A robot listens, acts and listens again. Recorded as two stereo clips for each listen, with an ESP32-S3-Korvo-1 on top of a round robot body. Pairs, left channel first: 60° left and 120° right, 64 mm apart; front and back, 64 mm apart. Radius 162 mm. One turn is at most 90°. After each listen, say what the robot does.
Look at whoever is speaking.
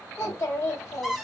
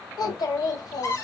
Turn 10° left.
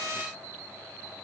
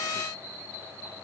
Keep listening.
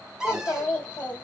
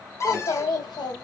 Facing the child speaking, 2 to 4 m away.